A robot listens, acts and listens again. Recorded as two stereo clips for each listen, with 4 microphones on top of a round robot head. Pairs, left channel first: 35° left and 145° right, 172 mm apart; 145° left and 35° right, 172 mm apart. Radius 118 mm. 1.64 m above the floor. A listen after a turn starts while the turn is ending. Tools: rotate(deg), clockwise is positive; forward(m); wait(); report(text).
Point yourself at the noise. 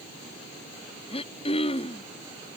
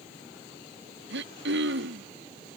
rotate(20)
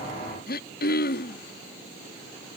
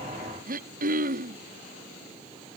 report("Facing the throat clearing.")